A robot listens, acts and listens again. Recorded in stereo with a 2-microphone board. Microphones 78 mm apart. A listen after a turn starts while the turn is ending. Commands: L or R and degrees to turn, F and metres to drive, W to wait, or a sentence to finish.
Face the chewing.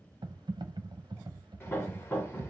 W
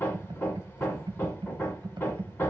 W
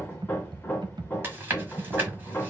R30
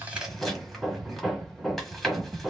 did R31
Found it: chewing, straight ahead.